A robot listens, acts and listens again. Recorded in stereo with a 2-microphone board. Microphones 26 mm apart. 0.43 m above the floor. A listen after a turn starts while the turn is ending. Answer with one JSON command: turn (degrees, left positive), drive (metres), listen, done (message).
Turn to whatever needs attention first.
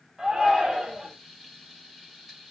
{"turn": -25}
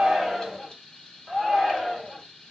{"done": "Found it: a shout, straight ahead, 2 to 4 m away."}